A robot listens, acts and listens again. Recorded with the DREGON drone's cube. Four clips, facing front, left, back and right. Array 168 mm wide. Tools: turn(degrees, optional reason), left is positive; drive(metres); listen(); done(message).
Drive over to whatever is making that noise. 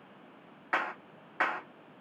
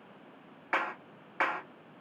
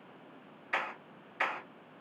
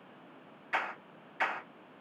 turn(degrees=45, reason="The clap: 45° left.")
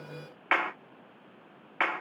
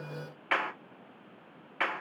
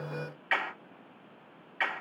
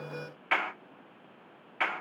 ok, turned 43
drive(metres=1.0)
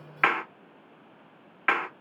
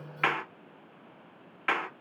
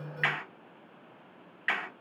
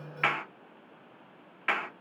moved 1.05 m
drive(metres=1.0)
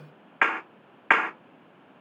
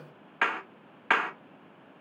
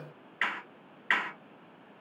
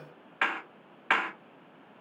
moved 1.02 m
drive(metres=1.0)
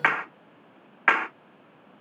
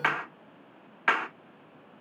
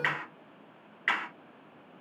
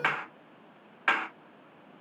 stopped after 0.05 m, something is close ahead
done("Arrived at the clap, straight ahead.")